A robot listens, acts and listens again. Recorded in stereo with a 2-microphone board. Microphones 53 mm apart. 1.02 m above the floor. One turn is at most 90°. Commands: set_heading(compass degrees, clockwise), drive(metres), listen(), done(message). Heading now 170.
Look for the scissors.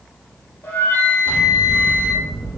set_heading(115)
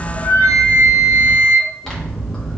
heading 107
set_heading(92)
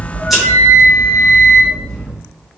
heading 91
done("Facing the scissors.")